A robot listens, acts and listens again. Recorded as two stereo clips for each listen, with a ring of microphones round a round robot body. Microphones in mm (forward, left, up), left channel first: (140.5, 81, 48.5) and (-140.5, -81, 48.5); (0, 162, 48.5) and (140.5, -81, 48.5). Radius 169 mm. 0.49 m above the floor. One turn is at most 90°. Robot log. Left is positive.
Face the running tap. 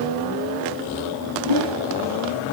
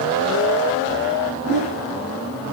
cmd idle
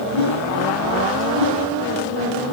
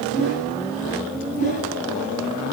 cmd idle
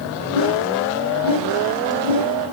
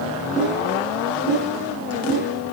end: I can't make out a running tap, only a whoosh.